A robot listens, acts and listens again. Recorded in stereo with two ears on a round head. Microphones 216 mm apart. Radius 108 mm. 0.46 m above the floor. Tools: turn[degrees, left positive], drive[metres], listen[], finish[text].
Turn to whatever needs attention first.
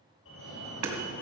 Thought: The fire alarm: about 55° left or 125° left.
Action: turn[55]
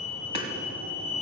Thought: So it is at 35° left.
Action: turn[35]
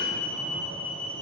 Action: finish[Found it: a fire alarm, straight ahead.]